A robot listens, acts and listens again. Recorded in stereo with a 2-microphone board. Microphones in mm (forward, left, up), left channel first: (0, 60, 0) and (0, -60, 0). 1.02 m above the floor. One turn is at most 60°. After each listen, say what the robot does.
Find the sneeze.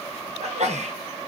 Turn 60° right.
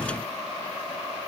Keep listening.
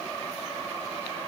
I heard a sneeze, but can't make it out now. It was about 10° right or 50° right.